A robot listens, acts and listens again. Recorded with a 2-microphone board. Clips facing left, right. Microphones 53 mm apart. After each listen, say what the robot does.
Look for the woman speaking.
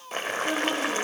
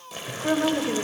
Turn 30° right.
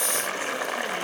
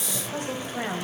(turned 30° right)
Keep listening.
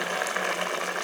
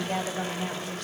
Keep listening.
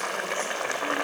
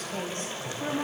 I heard a woman speaking, but can't make it out now. It was about straight ahead or 120° right.